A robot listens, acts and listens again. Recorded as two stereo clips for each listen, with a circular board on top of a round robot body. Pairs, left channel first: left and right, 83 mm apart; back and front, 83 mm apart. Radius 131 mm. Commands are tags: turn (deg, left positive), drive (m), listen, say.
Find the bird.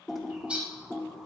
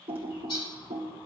<turn deg="-165"/>
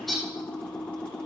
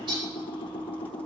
<say>Facing the bird, 2 to 4 m away.</say>